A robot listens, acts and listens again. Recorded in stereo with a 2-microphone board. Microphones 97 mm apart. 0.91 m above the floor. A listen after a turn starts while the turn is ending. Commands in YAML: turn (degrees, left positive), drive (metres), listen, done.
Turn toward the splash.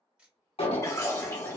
turn: 30
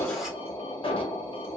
listen: true
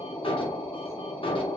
done: "I heard a splash, but can't make it out now. It was about straight ahead or 120° left."